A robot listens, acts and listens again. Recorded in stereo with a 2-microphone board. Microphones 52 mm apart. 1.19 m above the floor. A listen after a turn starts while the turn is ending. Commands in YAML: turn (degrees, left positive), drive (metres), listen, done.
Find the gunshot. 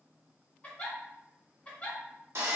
listen: true
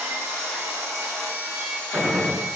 turn: -30
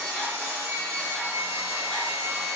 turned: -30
listen: true
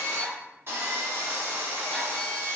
done: "I heard a gunshot, but can't make it out now. It was about straight ahead or 120° right."